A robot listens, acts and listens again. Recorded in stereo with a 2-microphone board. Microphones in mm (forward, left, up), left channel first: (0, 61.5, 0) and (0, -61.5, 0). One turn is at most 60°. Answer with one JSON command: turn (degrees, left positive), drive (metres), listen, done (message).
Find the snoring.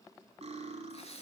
{"listen": true}
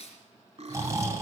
{"turn": -25}
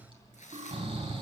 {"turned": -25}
{"turn": -60}
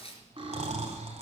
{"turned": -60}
{"turn": -60}
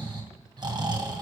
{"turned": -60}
{"turn": -40}
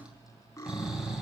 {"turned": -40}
{"done": "Facing the snoring."}